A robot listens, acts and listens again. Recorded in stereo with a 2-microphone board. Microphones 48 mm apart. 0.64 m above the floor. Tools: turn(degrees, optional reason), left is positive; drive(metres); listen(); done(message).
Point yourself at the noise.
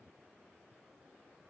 listen()
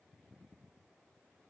listen()
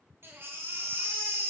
turn(degrees=-60, reason="The baby crying: about 60° right or 120° right.")
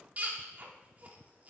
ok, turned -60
turn(degrees=-40, reason="So it is at 40° right.")
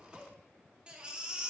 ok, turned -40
turn(degrees=-25, reason="The baby crying is now 25° right.")
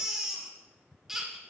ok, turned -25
turn(degrees=-10, reason="The baby crying is now 10° right.")
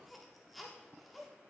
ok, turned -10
done("Found it: a baby crying, straight ahead.")